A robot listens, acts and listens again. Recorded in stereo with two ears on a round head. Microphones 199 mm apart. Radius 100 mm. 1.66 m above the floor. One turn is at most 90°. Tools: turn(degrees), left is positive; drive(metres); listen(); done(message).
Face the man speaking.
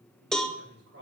turn(degrees=-60)
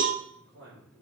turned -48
turn(degrees=-65)
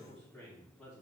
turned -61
done("Found it: a man speaking, straight ahead, 2 to 4 m away.")